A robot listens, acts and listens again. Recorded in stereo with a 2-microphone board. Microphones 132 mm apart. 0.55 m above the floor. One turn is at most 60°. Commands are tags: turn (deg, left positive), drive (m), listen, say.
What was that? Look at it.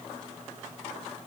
<listen/>
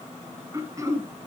<turn deg="-25"/>
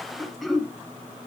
<say>Facing the throat clearing, 2 to 4 m away.</say>